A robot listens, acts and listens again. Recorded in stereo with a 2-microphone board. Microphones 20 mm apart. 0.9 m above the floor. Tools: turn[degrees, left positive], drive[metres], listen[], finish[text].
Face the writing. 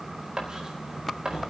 Thought: The writing: about 45° right or 135° right.
Action: turn[-45]
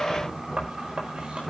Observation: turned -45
Thought: So it is at 85° right.
Action: turn[-85]
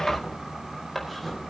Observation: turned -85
Action: finish[Facing the writing.]